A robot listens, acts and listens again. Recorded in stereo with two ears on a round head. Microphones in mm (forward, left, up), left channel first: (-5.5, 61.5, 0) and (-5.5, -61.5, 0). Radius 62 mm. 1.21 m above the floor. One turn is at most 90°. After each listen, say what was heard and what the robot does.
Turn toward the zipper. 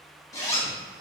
The zipper: about 25° left or 155° left. Turn 25° left.
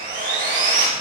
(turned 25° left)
Keep listening.
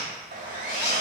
So it is at 135° left. Turn 90° left.
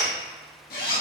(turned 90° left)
The zipper is now 70° left. Turn 70° left.
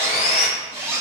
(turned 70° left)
The zipper is now 20° right. Turn 20° right.
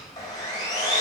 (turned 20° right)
Keep listening.
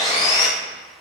Keep listening.
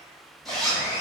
Found it: a zipper, straight ahead.